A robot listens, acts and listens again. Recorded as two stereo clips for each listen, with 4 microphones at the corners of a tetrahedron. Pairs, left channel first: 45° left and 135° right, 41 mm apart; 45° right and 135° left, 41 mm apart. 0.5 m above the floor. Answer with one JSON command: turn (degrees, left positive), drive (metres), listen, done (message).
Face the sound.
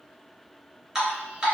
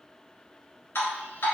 {"turn": -60}
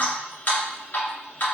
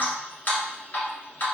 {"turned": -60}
{"done": "Found it: dripping, straight ahead."}